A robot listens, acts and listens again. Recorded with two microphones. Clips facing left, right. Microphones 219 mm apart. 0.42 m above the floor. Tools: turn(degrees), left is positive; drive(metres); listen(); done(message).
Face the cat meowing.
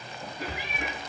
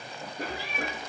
turn(degrees=15)
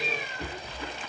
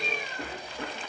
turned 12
listen()
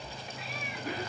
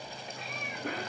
listen()
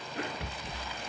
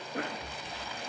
done("I heard a cat meowing, but can't make it out now. It was about 5° left or 150° left.")